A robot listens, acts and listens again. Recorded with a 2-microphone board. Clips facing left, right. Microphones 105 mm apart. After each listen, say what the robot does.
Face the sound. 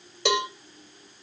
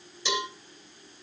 Turn 90° left.
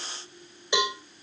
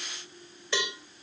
Turn 15° left.
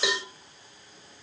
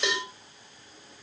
Found it: a cowbell, straight ahead.